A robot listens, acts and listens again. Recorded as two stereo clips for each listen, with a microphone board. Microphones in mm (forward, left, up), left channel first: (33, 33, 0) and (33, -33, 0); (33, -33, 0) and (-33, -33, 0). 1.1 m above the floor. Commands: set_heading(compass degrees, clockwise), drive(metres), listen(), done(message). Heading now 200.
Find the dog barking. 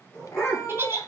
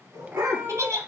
set_heading(40)
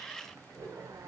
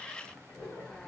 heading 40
set_heading(85)
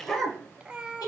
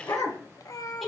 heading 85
set_heading(75)
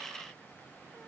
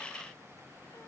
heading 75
listen()
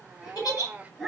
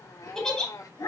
done("Found it: a dog barking, straight ahead.")